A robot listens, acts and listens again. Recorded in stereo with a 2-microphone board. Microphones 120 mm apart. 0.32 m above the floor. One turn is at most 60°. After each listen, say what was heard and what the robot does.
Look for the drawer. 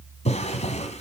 The drawer: about 65° left or 115° left. Turn 60° left.
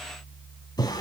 So it is at 35° left. Turn 35° left.
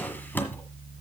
The drawer is now 15° left. Turn 15° left.
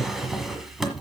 Facing the drawer, 1 to 2 m away.